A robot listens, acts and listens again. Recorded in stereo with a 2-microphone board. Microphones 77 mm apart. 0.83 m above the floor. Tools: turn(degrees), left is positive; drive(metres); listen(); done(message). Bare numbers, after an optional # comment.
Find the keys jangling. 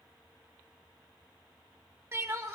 listen()
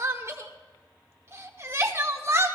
listen()
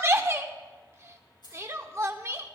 # The keys jangling: about 65° left or 115° left.
turn(65)
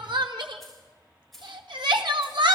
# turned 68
done("Facing the keys jangling.")